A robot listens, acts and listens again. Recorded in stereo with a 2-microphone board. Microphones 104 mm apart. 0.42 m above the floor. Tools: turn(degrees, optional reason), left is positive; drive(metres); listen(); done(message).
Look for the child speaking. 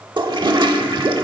listen()
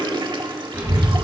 turn(degrees=-35, reason="The child speaking: about 35° right or 145° right.")
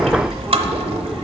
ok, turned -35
done("Facing the child speaking.")